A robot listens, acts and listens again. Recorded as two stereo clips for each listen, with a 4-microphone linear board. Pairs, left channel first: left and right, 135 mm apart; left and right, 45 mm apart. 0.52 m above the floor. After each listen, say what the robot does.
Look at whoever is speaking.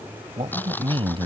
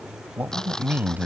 Turn 45° right.
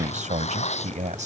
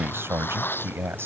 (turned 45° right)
Turn 85° right.
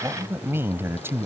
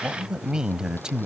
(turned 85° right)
Turn 20° right.
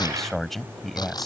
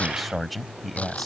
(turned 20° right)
Found it: a man speaking, straight ahead.